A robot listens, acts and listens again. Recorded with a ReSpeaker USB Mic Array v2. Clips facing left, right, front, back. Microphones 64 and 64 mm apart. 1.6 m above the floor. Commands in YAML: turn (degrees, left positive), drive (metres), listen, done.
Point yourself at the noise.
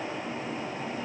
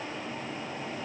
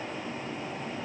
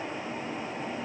listen: true
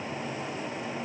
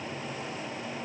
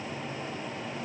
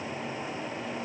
listen: true
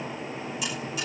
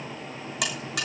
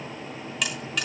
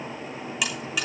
turn: -95
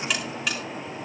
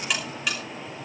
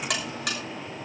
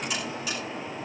done: "Found it: a buzzer, straight ahead, over 4 m away."